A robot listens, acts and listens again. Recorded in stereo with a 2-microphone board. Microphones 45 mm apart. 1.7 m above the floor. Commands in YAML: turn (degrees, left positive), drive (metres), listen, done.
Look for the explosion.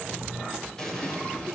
turn: 30
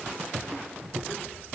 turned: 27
listen: true
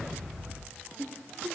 done: "I heard an explosion, but can't make it out now. It was about 15° right or 140° left."